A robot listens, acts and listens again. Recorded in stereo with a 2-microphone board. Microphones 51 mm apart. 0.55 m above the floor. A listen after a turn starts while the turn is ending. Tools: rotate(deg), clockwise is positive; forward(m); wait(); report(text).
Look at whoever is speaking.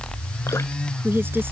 rotate(45)
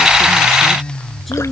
report("Found it: a woman speaking, straight ahead.")